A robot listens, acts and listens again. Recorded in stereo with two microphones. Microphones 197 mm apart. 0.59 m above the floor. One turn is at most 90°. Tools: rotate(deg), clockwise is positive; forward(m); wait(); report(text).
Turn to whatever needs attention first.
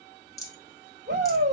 rotate(60)
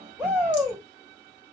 report("Found it: a shout, straight ahead, 2 to 4 m away.")